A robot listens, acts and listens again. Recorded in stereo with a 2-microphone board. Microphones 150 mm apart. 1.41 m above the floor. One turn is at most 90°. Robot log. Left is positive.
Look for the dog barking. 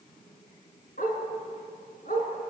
note: The dog barking: about 65° left or 115° left.
cmd yaw +65
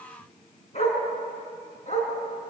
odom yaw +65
note: So it is at 50° left.
cmd yaw +50
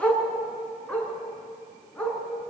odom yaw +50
end: Found it: a dog barking, straight ahead, over 4 m away.